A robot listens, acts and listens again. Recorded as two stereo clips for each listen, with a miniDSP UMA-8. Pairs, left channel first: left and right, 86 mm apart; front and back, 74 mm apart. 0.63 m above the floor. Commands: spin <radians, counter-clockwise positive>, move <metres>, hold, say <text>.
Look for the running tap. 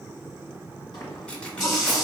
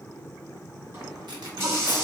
spin 2.27
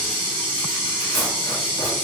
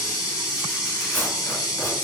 spin 0.52
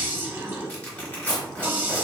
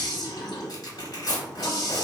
spin -0.35
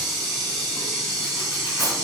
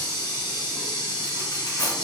say Found it: a running tap, straight ahead, 1 to 2 m away.